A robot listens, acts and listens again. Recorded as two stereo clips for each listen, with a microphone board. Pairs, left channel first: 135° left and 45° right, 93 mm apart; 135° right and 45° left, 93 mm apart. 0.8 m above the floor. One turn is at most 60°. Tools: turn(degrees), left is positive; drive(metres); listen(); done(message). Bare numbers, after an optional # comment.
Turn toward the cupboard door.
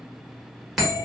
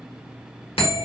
listen()
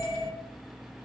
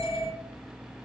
listen()
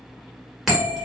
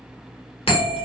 done("I can't make out a cupboard door to turn to.")